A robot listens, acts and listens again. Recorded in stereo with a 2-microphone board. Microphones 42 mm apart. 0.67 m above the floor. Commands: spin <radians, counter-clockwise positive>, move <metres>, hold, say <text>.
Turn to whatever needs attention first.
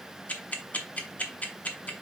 hold
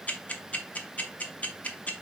hold
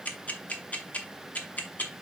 say I can't make out anything urgent, only ticking.